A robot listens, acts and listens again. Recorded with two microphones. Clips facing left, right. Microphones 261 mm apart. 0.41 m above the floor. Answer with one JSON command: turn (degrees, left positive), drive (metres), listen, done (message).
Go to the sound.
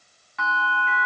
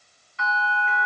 {"turn": 70}
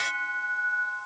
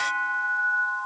{"turn": 25}
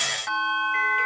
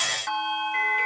{"drive": 1.0}
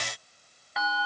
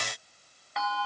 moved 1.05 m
{"drive": 1.0}
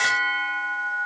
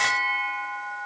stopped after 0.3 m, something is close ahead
{"done": "I am next to the bell."}